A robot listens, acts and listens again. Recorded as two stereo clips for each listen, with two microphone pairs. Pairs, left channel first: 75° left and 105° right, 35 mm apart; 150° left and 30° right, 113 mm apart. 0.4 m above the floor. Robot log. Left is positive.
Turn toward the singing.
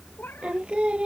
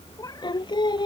note: The singing: 165° right.
cmd yaw -165
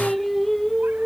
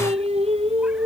end: Found it: singing, straight ahead.